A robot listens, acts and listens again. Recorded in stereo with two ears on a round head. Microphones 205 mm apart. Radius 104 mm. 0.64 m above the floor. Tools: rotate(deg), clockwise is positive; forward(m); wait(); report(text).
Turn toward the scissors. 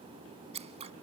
rotate(30)
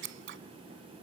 rotate(120)
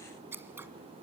rotate(10)
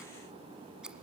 report("Facing the scissors.")